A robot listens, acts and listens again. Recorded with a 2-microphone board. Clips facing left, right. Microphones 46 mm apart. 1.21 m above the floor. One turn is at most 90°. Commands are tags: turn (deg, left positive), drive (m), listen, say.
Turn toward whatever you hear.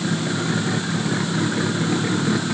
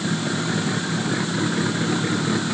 <listen/>
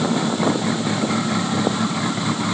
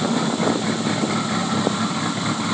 <listen/>
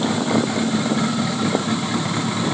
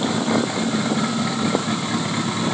<say>I can't make out anything to turn to.</say>